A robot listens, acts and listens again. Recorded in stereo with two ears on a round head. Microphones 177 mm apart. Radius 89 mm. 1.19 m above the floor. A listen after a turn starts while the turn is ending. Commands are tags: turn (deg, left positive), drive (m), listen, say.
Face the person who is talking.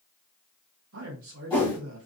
<turn deg="-70"/>
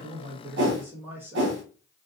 <turn deg="-10"/>
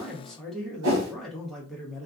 <say>Found it: a man speaking, straight ahead.</say>